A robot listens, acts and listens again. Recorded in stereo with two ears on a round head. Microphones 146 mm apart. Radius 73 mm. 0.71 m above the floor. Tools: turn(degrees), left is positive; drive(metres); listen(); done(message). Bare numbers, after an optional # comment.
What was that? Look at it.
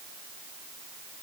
listen()
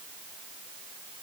listen()
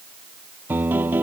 turn(-30)
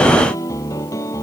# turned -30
# So it is at 20° left.
turn(20)
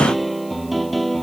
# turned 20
done("Facing the piano.")